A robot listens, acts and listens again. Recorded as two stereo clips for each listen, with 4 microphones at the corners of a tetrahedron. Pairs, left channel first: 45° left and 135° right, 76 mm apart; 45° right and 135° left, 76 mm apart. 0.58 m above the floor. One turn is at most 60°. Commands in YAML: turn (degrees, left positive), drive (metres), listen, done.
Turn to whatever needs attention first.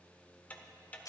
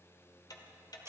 listen: true
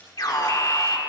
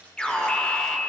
turn: 30
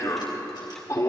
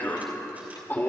turn: 10
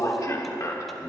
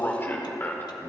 turn: 10
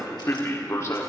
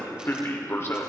done: "Facing the alarm."